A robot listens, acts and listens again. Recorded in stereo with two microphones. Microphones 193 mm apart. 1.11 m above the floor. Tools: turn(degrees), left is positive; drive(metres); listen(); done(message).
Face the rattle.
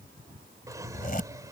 listen()
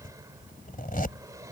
listen()
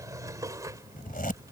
done("I can't make out a rattle to turn to.")